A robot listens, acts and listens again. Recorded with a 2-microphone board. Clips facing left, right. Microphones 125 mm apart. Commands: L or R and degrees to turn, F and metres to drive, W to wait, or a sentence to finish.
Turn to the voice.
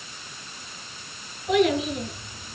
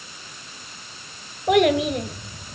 R65
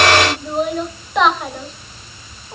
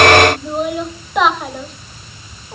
Facing the child speaking, 2 to 4 m away.